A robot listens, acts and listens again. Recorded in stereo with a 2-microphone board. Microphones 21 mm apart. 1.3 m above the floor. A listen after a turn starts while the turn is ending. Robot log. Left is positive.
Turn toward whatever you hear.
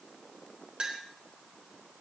note: The clink: about 45° right or 135° right.
cmd yaw -45
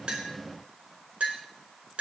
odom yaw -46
note: So it is at 90° right.
cmd yaw -90
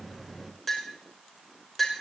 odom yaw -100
end: Found it: a clink, straight ahead, over 4 m away.